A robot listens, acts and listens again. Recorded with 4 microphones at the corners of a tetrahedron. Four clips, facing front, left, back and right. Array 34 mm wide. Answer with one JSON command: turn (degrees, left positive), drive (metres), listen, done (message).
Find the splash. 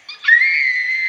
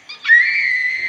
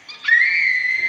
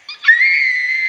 {"listen": true}
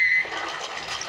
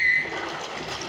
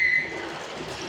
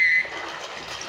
{"turn": -20}
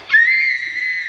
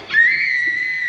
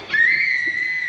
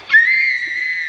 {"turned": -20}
{"done": "I heard a splash from this way, but can't make it out now."}